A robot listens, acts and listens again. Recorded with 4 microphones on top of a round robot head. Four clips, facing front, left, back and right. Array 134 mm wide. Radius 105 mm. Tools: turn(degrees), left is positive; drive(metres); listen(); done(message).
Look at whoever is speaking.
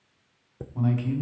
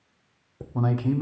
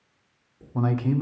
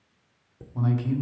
turn(degrees=140)
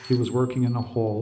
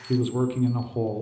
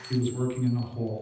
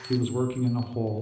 turn(degrees=10)
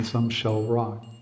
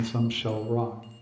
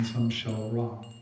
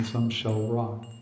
done("Found it: a man speaking, straight ahead.")